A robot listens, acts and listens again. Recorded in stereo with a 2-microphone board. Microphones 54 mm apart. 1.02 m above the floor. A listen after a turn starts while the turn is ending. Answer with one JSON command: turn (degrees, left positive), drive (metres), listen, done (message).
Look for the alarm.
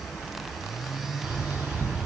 {"listen": true}
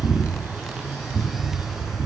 {"listen": true}
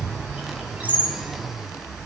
{"done": "I can't make out an alarm to turn to."}